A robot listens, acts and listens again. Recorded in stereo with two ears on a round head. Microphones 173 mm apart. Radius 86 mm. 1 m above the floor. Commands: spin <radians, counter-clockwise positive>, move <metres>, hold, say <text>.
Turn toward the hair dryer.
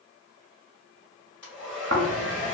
spin 0.52
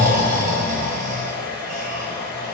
spin -0.35
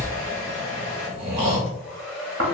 say Found it: a hair dryer, straight ahead, 1 to 2 m away.